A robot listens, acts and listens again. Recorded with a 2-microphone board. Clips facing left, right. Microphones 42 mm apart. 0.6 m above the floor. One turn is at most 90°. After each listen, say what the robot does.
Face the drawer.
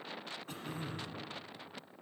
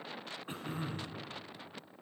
Keep listening.
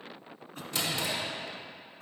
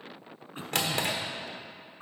Turn 65° right.
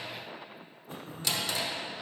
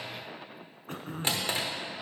Turn 45° right.
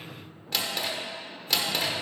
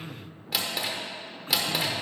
Found it: a drawer, straight ahead.